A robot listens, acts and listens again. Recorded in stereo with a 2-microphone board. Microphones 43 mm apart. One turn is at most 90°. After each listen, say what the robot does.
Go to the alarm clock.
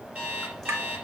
Turn 30° right.
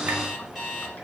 Drive 1.0 m forward.
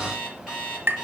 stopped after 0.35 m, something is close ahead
Turn 10° left.
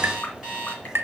Something is in my way. I am facing the alarm clock but have not reached it.